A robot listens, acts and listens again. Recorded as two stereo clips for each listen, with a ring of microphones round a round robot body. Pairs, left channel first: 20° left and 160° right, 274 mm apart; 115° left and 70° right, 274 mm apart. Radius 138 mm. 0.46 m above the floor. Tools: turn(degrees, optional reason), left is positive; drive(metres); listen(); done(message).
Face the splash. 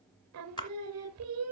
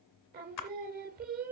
turn(degrees=100, reason="The splash: 100° left.")
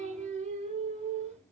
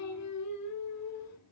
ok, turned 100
done("Facing where the splash came from. I can't hear it now.")